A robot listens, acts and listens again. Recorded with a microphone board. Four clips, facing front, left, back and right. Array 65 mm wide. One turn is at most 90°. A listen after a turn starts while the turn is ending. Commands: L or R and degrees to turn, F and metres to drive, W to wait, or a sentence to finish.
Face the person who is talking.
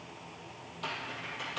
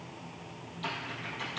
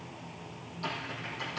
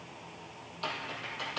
W
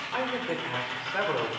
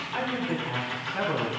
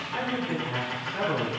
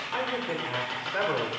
R55
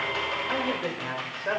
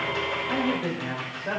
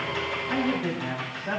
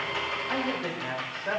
Facing the man speaking, 2 to 4 m away.